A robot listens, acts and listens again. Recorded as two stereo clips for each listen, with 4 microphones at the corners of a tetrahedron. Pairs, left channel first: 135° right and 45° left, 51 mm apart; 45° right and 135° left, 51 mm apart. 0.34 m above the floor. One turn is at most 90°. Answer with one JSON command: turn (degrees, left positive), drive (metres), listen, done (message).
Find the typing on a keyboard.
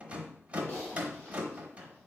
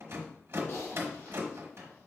{"turn": -75}
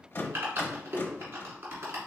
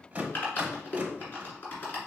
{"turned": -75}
{"turn": 10}
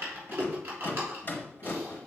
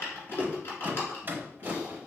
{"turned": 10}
{"done": "Found it: typing on a keyboard, straight ahead, 1 to 2 m away."}